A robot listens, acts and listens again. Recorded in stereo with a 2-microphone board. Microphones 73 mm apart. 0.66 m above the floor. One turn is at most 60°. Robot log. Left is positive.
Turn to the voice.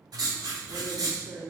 note: The woman speaking: about 50° right or 130° right.
cmd yaw -50
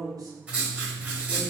note: So it is at 65° right.
cmd yaw -60
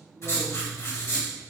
cmd idle
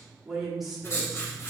end: Facing the woman speaking.